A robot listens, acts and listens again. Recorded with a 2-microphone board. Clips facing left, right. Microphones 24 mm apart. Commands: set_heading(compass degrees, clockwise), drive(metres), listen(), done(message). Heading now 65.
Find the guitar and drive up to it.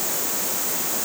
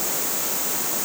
listen()
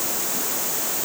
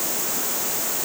listen()
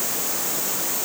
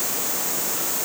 done("I can't make out a guitar to turn to.")